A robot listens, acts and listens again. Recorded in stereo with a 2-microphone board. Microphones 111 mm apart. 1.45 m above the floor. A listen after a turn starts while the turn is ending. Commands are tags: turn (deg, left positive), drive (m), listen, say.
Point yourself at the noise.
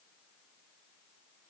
<listen/>
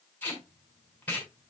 <turn deg="15"/>
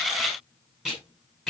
<say>Facing the tape being pulled, over 4 m away.</say>